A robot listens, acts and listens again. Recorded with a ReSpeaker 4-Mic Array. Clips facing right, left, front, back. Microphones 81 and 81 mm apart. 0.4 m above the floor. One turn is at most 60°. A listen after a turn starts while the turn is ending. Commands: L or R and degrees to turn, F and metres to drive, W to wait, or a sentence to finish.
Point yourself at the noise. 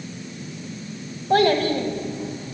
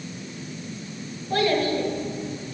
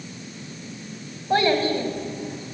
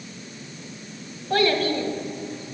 R60
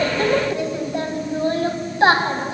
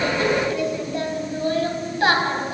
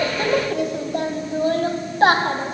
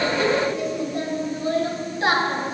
R30
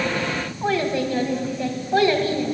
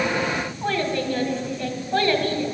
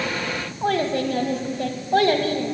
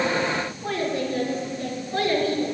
R15
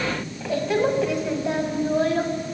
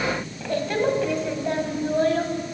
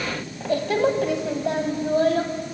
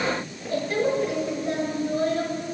Found it: a child speaking, straight ahead.